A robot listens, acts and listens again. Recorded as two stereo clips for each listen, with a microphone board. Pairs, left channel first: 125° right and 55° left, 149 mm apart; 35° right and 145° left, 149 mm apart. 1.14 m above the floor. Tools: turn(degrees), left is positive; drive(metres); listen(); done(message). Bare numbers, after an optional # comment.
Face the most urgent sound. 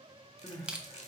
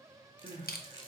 # The crying: 170° left.
turn(170)
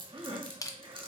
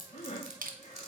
done("Facing the crying.")